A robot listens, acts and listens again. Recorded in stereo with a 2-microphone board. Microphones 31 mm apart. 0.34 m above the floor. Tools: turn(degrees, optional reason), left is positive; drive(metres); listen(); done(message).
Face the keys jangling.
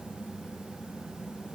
listen()
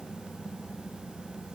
listen()
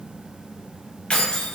turn(degrees=40, reason="The keys jangling: about 40° left or 140° left.")
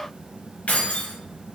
turn(degrees=95, reason="So it is at 95° left.")
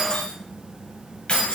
turn(degrees=40, reason="The keys jangling is now 40° left.")
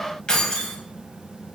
turn(degrees=30, reason="The keys jangling is now 30° left.")
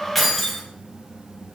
done("Facing the keys jangling, 1 to 2 m away.")